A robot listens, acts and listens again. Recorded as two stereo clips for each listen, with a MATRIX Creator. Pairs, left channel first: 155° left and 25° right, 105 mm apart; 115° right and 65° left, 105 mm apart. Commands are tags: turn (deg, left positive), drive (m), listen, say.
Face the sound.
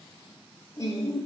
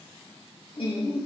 <turn deg="-145"/>
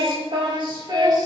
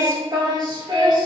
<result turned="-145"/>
<turn deg="25"/>
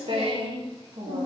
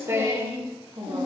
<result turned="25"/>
<turn deg="10"/>
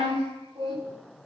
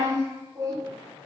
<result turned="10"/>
<turn deg="10"/>
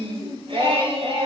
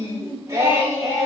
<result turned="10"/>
<say>Facing the singing.</say>